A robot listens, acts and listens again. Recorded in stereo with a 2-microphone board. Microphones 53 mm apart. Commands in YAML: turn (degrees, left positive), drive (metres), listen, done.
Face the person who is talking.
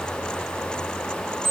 listen: true
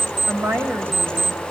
turn: -65
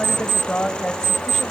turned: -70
done: "Found it: a woman speaking, straight ahead, 2 to 4 m away."